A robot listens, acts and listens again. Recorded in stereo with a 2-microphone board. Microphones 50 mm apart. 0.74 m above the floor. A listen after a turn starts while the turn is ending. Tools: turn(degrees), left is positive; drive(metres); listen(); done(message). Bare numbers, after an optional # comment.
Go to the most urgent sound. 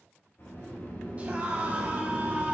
# The scream: about 30° right or 150° right.
turn(-30)
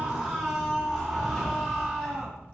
drive(1.0)
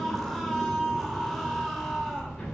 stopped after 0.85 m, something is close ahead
done("I am next to the scream.")